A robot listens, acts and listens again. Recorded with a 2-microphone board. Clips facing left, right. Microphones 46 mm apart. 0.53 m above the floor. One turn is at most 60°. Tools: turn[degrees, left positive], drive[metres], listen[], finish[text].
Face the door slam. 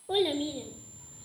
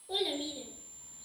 Action: listen[]
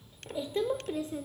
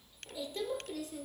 Action: listen[]
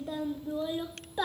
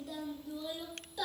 Action: finish[I can't make out a door slam, only a child speaking.]